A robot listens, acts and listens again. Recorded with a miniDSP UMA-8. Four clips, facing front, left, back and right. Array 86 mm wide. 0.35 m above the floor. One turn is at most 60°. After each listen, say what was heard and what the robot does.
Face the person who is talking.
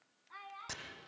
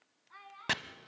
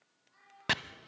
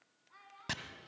The child speaking: 25° left. Turn 25° left.
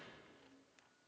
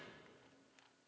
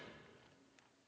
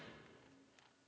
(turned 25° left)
Keep listening.
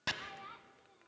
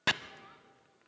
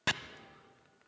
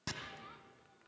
Keep listening.
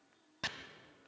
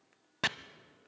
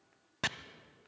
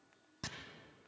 Facing where the child speaking came from. I can't hear it now.